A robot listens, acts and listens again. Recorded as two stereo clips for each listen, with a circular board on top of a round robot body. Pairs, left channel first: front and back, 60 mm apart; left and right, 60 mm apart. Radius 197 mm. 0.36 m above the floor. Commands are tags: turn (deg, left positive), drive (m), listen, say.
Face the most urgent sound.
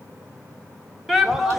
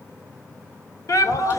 <turn deg="95"/>
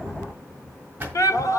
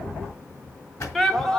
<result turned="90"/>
<say>Facing the shout.</say>